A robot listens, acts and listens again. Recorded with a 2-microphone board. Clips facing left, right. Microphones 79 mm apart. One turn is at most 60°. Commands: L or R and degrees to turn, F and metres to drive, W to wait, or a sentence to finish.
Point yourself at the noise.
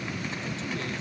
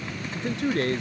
R60
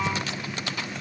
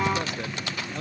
W
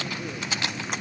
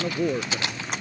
R55
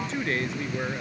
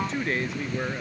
Facing the man speaking.